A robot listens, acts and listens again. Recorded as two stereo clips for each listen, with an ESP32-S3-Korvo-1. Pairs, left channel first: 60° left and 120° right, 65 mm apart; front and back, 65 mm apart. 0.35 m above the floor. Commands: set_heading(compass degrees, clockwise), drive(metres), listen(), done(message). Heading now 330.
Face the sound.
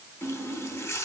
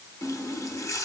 set_heading(310)
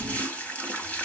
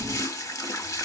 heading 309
done("Facing the running tap, 1 to 2 m away.")